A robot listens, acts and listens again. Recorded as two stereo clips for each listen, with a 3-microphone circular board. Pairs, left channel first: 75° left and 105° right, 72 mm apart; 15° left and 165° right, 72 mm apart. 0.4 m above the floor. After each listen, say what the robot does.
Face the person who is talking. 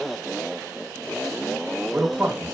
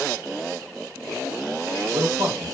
Turn 180° left.
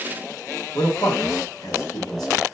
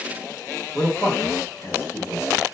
Turn 55° left.
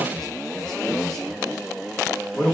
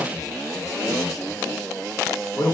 Turn 10° right.
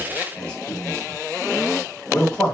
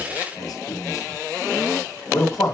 Found it: a man speaking, straight ahead, 2 to 4 m away.